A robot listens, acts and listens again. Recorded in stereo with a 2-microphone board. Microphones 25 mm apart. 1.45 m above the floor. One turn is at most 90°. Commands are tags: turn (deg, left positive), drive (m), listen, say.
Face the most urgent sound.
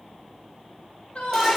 <turn deg="50"/>
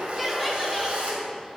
<listen/>
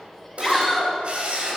<say>Found it: a shout, straight ahead.</say>